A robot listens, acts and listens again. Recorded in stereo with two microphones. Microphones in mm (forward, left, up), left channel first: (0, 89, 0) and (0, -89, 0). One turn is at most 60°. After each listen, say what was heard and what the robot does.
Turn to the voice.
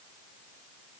Keep listening.
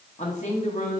The woman speaking: about 40° left or 140° left. Turn 40° left.
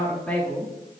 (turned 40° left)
So it is at 10° left. Turn 10° left.
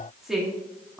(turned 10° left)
Found it: a woman speaking, straight ahead.